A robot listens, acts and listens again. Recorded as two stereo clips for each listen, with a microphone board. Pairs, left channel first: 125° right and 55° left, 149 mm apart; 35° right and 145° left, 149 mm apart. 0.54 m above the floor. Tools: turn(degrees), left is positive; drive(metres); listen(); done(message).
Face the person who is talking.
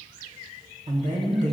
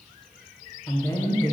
turn(degrees=35)
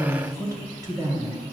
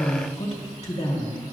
done("Facing the woman speaking.")